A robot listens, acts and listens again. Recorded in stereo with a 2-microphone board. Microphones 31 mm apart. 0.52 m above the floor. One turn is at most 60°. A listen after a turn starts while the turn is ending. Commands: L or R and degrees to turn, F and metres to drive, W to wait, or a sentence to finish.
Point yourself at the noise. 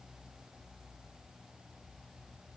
W
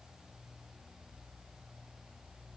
W
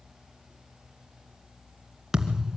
R30
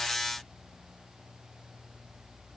W
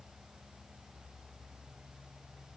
I heard a thud, but can't make it out now. It was about 15° left or 135° right.